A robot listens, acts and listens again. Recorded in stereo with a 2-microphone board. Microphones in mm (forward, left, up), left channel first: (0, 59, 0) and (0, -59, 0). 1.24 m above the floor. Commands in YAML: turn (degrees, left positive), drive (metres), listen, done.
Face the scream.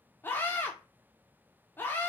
turn: 20
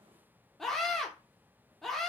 done: "Facing the scream, 1 to 2 m away."